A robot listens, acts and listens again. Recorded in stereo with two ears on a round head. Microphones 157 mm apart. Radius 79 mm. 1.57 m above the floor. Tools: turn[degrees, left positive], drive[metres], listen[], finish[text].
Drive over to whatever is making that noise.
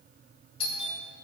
Thought: The doorbell: about 35° left or 145° left.
Action: turn[35]
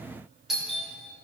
Action: drive[1.0]
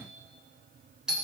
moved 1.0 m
Action: drive[1.0]
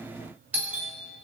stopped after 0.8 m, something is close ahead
Thought: The doorbell is now 10° right.
Action: turn[-10]
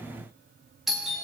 Action: finish[Arrived at the doorbell, straight ahead.]